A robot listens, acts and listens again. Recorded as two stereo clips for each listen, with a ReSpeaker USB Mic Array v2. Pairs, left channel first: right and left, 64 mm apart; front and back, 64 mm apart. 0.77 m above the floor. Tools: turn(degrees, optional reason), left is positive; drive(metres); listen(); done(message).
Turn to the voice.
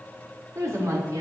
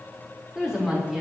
turn(degrees=100, reason="The woman speaking: 100° left.")
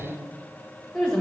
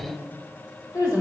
done("Facing the woman speaking, over 4 m away.")